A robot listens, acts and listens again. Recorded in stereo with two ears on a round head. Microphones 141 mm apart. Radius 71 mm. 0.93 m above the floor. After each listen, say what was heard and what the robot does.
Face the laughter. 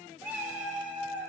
Keep listening.
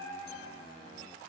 Keep listening.
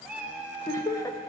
The laughter: about 20° left or 160° left. Turn 20° left.
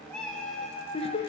So it is at 140° left. Turn 140° left.
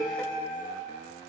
Facing the laughter.